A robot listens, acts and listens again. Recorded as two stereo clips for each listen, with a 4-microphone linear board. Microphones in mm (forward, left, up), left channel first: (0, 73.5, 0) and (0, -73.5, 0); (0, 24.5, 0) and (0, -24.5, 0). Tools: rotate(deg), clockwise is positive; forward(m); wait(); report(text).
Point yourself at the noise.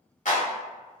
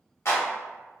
rotate(-60)
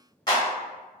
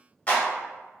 rotate(-35)
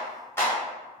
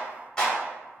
rotate(-20)
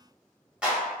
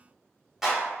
rotate(10)
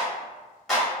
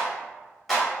report("Found it: a clap, straight ahead.")